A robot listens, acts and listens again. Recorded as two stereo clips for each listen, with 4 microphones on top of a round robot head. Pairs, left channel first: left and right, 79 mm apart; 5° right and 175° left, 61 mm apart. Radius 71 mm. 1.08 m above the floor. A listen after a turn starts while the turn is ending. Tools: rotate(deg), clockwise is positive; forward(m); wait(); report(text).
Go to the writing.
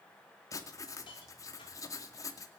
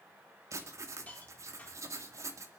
rotate(-135)
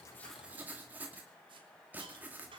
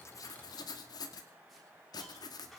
rotate(20)
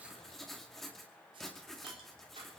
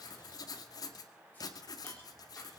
forward(1.0)
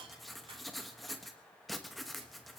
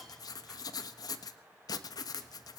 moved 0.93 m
forward(1.0)
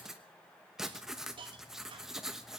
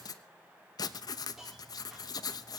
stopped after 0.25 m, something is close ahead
report("Arrived at the writing, straight ahead.")